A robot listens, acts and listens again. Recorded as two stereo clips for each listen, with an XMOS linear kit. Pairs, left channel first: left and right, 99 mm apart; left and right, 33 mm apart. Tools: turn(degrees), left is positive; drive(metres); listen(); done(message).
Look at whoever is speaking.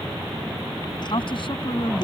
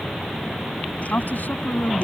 turn(degrees=60)
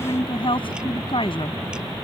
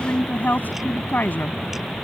turn(degrees=65)
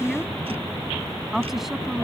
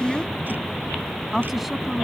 done("Found it: a woman speaking, straight ahead.")